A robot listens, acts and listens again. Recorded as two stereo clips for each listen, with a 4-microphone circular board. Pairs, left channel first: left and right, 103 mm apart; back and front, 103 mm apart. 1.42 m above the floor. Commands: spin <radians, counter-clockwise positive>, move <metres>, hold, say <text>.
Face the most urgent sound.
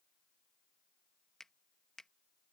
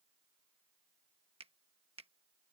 hold
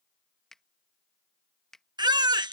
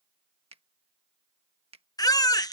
spin -2.27
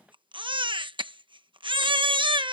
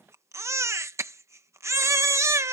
spin -1.05
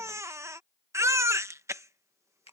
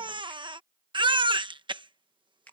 spin -0.52
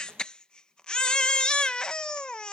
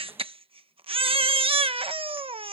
spin 0.17
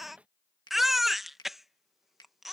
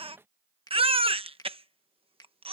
say Found it: a baby crying, straight ahead.